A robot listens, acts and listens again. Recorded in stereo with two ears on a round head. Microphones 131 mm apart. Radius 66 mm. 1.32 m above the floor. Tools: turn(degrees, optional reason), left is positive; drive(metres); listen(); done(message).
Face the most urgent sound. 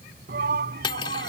turn(degrees=-70, reason="The shout: about 70° right or 110° right.")
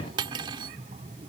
turn(degrees=-40, reason="So it is at 40° right.")
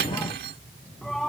done("Found it: a shout, straight ahead.")